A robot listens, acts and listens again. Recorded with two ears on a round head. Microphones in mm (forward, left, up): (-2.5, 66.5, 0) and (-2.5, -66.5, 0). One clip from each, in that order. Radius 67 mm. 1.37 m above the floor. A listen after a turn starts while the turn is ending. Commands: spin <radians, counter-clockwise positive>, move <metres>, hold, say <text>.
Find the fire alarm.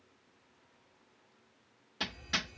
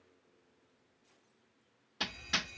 spin -0.87
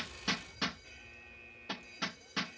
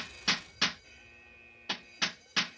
say Found it: a fire alarm, straight ahead.